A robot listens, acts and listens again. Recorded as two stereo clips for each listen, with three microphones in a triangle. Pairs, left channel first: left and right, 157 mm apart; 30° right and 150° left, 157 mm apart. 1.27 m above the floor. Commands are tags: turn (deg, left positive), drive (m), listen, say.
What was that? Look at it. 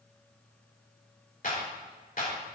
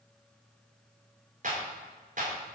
<turn deg="120"/>
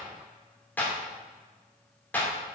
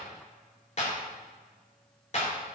<turn deg="10"/>
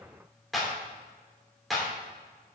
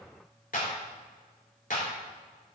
<say>Found it: a clap, straight ahead.</say>